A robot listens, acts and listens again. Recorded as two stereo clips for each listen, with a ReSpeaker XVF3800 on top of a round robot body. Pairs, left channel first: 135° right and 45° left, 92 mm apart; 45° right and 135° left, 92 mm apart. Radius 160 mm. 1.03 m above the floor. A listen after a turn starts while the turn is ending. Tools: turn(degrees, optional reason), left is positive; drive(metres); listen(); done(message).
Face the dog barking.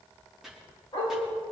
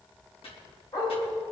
turn(degrees=-95, reason="The dog barking: 95° right.")
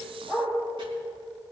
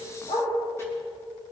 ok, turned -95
turn(degrees=-40, reason="The dog barking is now 40° right.")
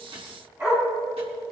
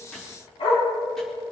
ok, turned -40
turn(degrees=-25, reason="The dog barking is now 25° right.")
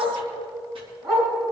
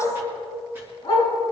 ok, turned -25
done("Found it: a dog barking, straight ahead, over 4 m away.")